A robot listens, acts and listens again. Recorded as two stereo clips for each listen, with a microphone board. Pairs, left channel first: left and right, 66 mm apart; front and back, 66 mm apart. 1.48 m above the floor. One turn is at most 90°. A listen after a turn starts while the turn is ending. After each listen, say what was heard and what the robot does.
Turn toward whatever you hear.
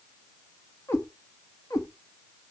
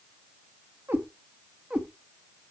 The cat meowing: 110° left. Turn 90° left.
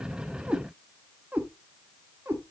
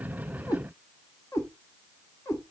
The cat meowing is now 35° right. Turn 35° right.
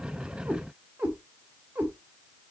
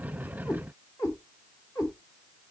The cat meowing is now 25° right. Turn 25° right.
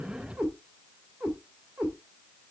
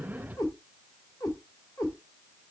The cat meowing is now 10° right. Turn 10° right.
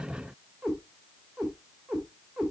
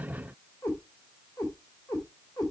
Found it: a cat meowing, straight ahead, 2 to 4 m away.